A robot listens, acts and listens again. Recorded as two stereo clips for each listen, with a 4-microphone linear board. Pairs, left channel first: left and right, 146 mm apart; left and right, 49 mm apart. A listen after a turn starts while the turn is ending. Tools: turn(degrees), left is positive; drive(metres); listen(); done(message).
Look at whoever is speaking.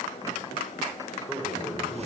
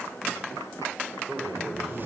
turn(degrees=30)
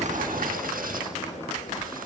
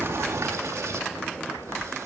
listen()
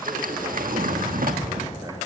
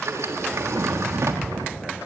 listen()
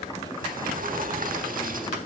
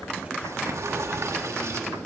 done("I heard a man speaking, but can't make it out now. It was about 30° right or 150° left.")